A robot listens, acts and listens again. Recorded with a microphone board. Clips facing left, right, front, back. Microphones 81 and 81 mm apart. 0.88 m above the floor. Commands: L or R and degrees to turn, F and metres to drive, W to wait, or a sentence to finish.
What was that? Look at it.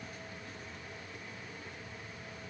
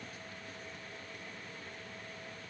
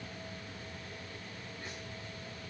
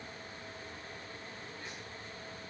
W
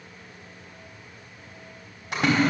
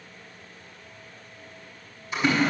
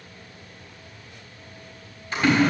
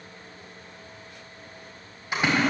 L100
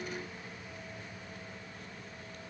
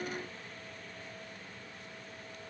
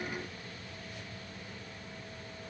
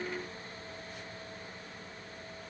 Facing where the splash came from. I can't hear it now.